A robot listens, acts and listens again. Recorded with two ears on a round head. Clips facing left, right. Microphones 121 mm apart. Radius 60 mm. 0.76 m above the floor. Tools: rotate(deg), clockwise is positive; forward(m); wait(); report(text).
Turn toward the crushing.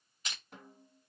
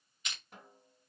rotate(-30)
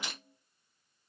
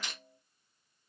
rotate(-10)
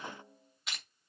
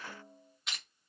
report("Facing the crushing.")